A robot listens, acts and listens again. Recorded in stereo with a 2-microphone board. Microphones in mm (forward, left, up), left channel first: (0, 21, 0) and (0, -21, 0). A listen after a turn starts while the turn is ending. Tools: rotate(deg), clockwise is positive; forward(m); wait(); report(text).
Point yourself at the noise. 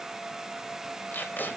rotate(-50)
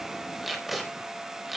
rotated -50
report("Found it: tape being pulled, straight ahead, over 4 m away.")